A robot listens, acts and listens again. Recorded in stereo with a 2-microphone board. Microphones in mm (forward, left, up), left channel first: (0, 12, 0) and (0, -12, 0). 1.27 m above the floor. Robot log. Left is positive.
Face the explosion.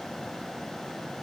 cmd idle
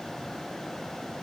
cmd idle
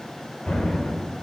note: The explosion: about 30° left or 150° left.
cmd yaw +30
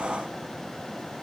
cmd idle
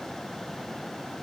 end: I heard an explosion, but can't make it out now. It was about straight ahead or 120° left.